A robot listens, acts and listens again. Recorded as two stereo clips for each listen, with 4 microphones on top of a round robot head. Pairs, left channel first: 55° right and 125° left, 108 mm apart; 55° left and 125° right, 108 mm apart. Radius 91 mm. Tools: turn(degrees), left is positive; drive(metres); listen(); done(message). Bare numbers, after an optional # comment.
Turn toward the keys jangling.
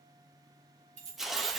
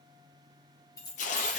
# The keys jangling: 110° left.
turn(110)
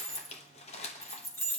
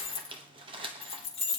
# The keys jangling is now 15° left.
turn(15)
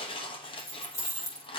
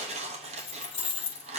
# The keys jangling is now 10° left.
turn(10)
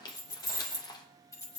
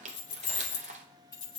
# The keys jangling is now 10° left.
turn(10)
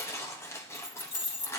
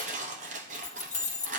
done("Found it: keys jangling, straight ahead.")